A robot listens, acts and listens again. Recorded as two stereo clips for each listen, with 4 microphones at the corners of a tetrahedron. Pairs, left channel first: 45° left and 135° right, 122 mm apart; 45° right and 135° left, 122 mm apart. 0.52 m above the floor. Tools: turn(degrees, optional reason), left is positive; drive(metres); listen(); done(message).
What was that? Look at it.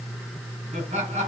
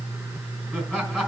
turn(degrees=-130, reason="The laughter: 130° right.")
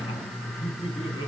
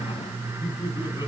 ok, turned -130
turn(degrees=15, reason="The laughter is now 15° left.")
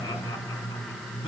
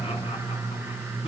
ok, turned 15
listen()
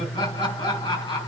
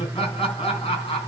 done("Found it: laughter, straight ahead.")